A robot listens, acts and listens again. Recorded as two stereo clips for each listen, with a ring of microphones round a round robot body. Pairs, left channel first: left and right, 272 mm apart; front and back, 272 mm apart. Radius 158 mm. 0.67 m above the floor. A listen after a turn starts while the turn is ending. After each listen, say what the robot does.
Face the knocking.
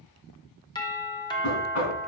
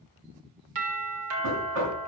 Turn 130° left.
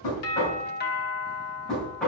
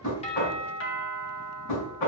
Facing the knocking.